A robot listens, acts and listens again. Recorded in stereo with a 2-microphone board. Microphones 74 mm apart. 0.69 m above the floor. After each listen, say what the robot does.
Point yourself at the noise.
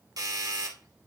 Turn 55° right.
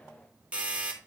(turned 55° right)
Turn 20° right.
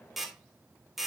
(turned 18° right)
Facing the doorbell.